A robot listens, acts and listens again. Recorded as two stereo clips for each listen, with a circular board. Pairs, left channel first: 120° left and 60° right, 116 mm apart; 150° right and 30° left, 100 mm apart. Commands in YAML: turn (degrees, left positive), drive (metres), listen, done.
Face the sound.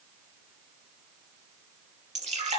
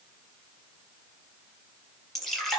turn: -65
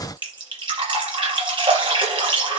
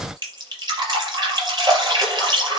turn: -15
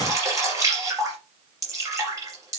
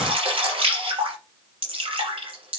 done: "Found it: dripping, straight ahead."